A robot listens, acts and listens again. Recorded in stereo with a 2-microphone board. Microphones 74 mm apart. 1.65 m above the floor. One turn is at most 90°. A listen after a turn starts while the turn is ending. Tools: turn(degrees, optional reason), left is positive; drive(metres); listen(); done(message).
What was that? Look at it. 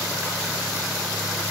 listen()
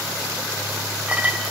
turn(degrees=-20, reason="The clink: about 20° right or 160° right.")
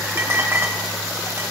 turn(degrees=-90, reason="So it is at 140° right.")
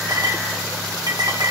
turn(degrees=-75, reason="The clink is now 75° right.")
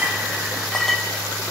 done("Facing the clink, 1 to 2 m away.")